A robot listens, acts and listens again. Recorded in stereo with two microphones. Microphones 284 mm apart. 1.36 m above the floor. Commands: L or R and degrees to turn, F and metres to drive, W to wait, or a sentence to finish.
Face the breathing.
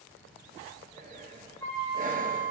R30
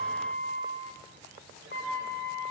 W
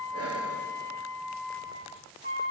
W
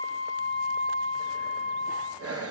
R115
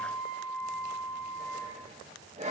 R25
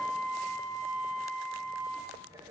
R10
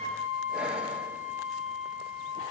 W
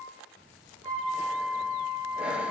Found it: breathing, straight ahead.